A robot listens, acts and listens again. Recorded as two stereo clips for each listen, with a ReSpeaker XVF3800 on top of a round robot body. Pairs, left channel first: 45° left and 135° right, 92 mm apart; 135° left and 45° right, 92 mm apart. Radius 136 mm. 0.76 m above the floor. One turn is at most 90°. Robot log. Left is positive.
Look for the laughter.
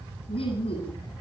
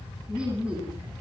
note: The laughter: 35° left.
cmd yaw +35
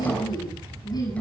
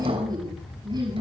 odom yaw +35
end: Found it: laughter, straight ahead, over 4 m away.